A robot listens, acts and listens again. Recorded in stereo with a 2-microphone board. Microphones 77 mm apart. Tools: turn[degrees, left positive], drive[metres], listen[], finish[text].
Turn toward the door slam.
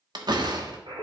Thought: The door slam: about 70° right or 110° right.
Action: turn[-70]
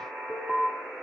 Action: listen[]
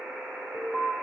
Action: finish[I heard a door slam, but can't make it out now. It was about straight ahead or 40° right.]